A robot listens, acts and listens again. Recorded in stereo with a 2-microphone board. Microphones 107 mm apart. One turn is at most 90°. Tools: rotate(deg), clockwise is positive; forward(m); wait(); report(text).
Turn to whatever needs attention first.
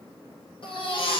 rotate(-55)
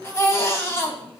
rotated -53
rotate(-30)
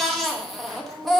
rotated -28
report("Found it: a baby crying, straight ahead.")